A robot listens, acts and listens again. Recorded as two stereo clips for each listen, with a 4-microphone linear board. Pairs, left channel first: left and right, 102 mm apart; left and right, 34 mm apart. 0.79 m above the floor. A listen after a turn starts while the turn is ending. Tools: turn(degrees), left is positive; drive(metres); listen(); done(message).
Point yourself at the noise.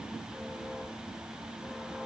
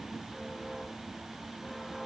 listen()
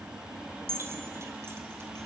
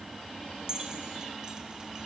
turn(degrees=-25)
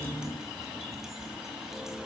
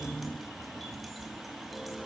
listen()
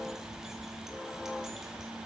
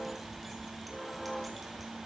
listen()
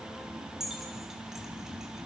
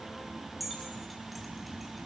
done("Found it: keys jangling, straight ahead, over 4 m away.")